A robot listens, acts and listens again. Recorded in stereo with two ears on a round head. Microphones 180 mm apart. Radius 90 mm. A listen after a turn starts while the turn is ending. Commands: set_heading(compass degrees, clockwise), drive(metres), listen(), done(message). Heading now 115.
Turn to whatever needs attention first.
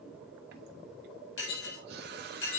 listen()
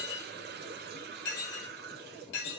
listen()
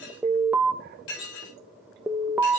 set_heading(145)
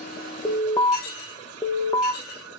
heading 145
set_heading(125)
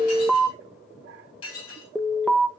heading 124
done("Found it: an alarm, straight ahead.")